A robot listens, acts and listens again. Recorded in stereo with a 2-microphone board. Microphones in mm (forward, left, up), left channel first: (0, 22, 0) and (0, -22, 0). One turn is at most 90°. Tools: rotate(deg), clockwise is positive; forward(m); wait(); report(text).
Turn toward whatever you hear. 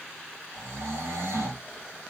rotate(90)
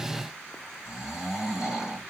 rotate(10)
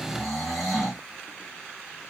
report("Found it: snoring, straight ahead, 2 to 4 m away.")